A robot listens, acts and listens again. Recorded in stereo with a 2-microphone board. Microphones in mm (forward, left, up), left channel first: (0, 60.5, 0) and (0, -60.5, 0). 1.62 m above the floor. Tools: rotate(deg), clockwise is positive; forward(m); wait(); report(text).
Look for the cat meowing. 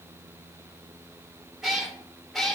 rotate(-30)
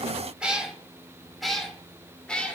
rotate(-30)
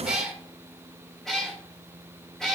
rotate(-30)
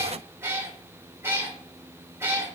rotate(20)
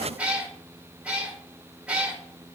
rotate(10)
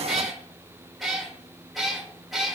report("Found it: a cat meowing, straight ahead, 2 to 4 m away.")